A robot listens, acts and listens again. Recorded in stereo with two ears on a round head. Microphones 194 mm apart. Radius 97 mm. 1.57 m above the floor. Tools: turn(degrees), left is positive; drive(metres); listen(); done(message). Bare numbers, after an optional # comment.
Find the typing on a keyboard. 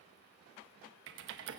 # The typing on a keyboard: about 55° right or 125° right.
turn(-55)
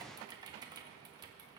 # So it is at 20° right.
turn(-20)
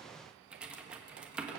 done("Facing the typing on a keyboard, 1 to 2 m away.")